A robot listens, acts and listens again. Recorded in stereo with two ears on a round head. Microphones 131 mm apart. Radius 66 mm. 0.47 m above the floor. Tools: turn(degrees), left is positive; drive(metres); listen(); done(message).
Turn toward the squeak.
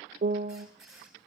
turn(degrees=-30)
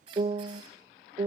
turn(degrees=-150)
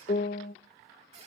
turn(degrees=-45)
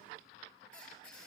done("Facing the squeak, over 4 m away.")